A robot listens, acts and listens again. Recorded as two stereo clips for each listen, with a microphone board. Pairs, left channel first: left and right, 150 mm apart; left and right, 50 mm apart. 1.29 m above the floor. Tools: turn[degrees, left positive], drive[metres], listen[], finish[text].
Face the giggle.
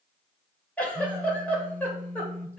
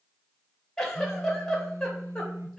Action: turn[30]
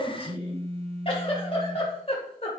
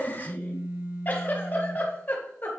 Thought: So it is at 140° left.
Action: turn[140]
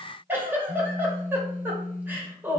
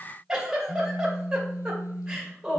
Thought: The giggle is now 15° right.
Action: turn[-15]
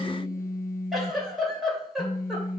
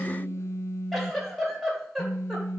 Action: finish[Facing the giggle, 2 to 4 m away.]